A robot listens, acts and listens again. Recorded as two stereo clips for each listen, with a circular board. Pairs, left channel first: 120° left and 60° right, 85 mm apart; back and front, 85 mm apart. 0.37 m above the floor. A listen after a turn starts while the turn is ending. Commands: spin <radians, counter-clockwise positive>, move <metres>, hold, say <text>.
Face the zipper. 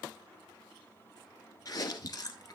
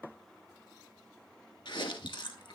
hold
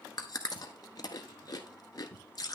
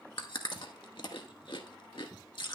hold
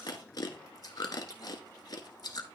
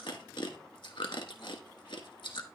say I can't make out a zipper to turn to.